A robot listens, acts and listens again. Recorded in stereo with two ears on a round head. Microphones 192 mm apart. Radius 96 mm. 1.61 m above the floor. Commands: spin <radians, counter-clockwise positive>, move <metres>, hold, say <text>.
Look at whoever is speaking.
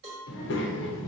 spin 1.05
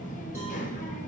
spin 0.79
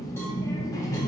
spin 0.35
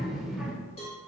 say Facing the child speaking, under 1 m away.